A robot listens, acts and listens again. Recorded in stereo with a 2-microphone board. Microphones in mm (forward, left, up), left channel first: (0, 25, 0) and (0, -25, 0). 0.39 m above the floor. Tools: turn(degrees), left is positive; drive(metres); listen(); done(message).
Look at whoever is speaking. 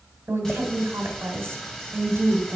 turn(degrees=-55)
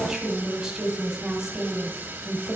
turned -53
turn(degrees=-10)
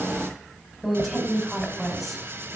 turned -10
done("Found it: a woman speaking, straight ahead, 2 to 4 m away.")